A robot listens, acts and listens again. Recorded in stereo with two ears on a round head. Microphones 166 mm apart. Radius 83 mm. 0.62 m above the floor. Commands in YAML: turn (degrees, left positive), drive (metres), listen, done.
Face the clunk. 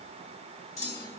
turn: 20
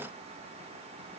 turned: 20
listen: true
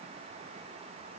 done: "I heard a clunk, but can't make it out now. It was about straight ahead or 140° left."